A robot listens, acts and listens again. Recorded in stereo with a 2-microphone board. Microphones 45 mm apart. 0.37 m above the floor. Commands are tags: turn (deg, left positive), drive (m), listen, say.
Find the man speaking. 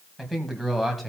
<turn deg="30"/>
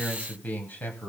<turn deg="140"/>
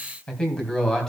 <turn deg="10"/>
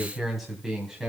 <turn deg="-10"/>
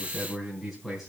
<say>Facing the man speaking, 2 to 4 m away.</say>